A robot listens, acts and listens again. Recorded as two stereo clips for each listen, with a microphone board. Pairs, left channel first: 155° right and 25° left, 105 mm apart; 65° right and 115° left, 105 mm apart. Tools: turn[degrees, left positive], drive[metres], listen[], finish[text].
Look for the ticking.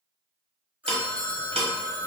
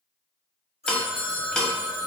Thought: The ticking: 15° left.
Action: turn[15]
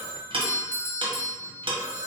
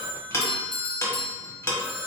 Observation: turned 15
Action: finish[Facing the ticking.]